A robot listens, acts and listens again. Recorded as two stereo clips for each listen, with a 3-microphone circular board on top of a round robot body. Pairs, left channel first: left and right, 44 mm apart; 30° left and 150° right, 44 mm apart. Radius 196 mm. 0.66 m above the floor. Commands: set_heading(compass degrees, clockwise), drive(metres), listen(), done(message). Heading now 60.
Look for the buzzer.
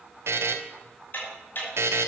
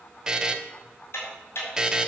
set_heading(135)
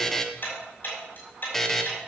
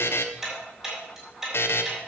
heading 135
set_heading(125)
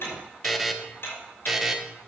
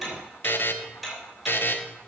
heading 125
done("Facing the buzzer.")